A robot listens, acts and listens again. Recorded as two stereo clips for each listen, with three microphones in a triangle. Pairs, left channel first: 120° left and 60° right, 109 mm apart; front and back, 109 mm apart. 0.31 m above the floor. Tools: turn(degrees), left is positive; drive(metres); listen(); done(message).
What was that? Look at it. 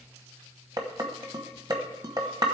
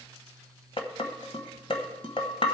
turn(degrees=-15)
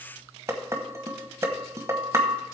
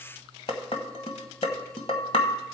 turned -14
done("Facing the dishes clattering.")